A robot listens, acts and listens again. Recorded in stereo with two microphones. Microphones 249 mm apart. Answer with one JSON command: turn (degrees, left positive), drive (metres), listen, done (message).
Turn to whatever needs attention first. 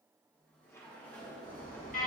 {"turn": 35}
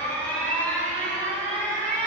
{"done": "Facing the alarm."}